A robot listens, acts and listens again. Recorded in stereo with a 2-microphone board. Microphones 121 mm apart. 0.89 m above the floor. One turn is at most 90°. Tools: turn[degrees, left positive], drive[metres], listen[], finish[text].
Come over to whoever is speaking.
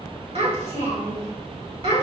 Thought: The child speaking: about 55° right or 125° right.
Action: turn[-55]
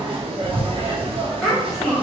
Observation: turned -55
Action: drive[1.0]
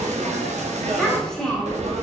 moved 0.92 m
Action: drive[1.0]
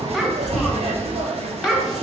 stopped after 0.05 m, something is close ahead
Action: finish[Arrived at the child speaking, straight ahead.]